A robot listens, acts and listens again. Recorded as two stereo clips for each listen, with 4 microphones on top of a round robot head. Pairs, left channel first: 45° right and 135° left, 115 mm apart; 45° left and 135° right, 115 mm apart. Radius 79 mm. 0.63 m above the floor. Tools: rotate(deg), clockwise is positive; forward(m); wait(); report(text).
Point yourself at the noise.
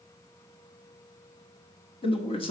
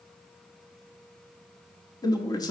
rotate(10)
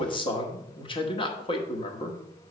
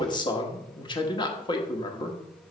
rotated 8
report("Facing the man speaking.")